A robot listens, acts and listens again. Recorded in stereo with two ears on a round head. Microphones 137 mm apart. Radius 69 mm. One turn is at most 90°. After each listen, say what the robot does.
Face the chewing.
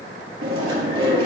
Turn 30° right.
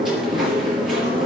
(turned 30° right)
Facing the chewing, over 4 m away.